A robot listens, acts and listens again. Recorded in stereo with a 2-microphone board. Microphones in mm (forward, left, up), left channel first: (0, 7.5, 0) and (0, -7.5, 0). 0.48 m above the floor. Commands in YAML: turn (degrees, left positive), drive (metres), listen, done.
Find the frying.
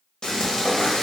turn: 70
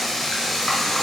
turn: 35
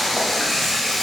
turn: 15
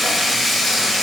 done: "Found it: frying, straight ahead, 1 to 2 m away."